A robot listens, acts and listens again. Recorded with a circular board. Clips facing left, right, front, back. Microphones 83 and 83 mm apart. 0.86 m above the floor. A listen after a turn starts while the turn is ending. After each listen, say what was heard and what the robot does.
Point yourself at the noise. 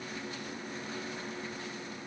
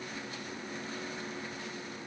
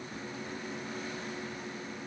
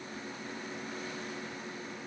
Keep listening.
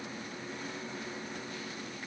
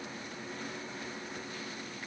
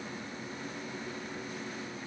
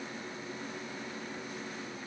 Keep listening.
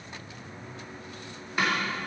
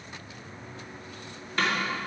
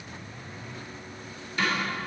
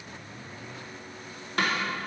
The snare drum: 170° left. Turn 170° left.
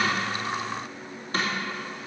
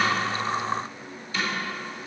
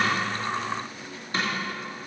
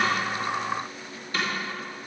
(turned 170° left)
The snare drum is now 55° left. Turn 55° left.
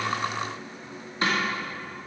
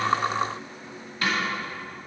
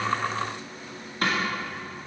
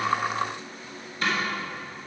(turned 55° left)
The snare drum is now 30° left. Turn 30° left.
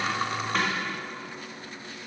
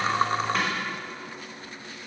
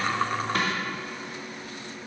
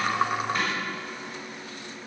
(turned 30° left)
Found it: a snare drum, straight ahead.